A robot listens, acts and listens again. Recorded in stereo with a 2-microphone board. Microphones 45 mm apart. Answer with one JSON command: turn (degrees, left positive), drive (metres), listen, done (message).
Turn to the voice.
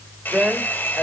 {"turn": -30}
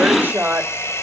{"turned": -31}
{"turn": -140}
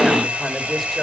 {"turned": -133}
{"done": "Found it: a woman speaking, straight ahead."}